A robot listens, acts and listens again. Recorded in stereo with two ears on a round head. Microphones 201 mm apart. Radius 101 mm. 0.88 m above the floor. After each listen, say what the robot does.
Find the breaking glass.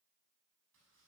Keep listening.
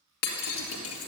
Turn 90° left.
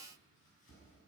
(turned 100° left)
Turn 10° right.
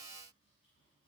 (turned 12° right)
I heard breaking glass from this way, but can't make it out now.